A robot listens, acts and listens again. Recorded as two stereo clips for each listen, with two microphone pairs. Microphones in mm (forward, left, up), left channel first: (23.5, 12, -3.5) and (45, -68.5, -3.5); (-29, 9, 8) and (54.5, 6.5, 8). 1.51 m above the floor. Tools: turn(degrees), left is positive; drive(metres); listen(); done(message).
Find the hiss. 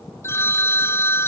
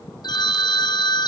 listen()
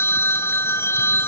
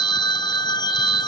listen()
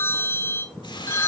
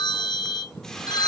turn(degrees=95)
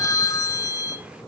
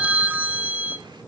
listen()
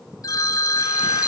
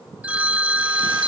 listen()
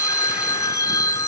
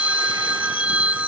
done("I heard a hiss from this way, but can't make it out now.")